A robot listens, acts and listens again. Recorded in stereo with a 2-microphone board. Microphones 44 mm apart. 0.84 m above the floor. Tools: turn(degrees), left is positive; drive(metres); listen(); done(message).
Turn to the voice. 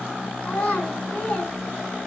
turn(degrees=35)
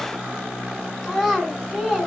done("Found it: a child speaking, straight ahead.")